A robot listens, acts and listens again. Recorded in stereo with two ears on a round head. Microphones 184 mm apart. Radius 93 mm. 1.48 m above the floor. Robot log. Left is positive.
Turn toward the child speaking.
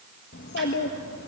note: The child speaking: about 60° left or 120° left.
cmd yaw +60
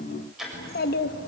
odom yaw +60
note: So it is at 55° left.
cmd yaw +55
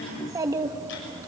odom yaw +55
note: The child speaking is now 15° right.
cmd yaw -15
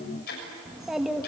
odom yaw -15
end: Found it: a child speaking, straight ahead, 1 to 2 m away.